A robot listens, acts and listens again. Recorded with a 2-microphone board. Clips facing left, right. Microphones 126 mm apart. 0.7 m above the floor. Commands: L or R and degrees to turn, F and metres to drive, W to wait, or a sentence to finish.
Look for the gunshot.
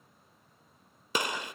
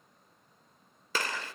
L15
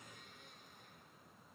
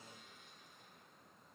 W
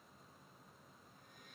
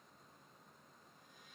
I heard a gunshot, but can't make it out now. It was about straight ahead or 150° left.